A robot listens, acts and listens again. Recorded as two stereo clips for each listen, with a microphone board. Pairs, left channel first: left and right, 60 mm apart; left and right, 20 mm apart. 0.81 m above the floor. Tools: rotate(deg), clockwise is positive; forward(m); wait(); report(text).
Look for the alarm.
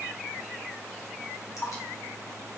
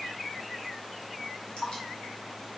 wait()
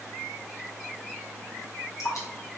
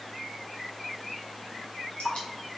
wait()
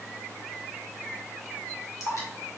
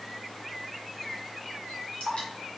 report("I can't make out an alarm, only dripping.")